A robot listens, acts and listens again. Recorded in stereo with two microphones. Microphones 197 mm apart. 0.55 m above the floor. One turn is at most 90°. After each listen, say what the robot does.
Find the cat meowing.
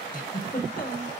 Keep listening.
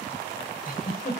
Keep listening.
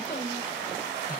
I can't make out a cat meowing to turn to.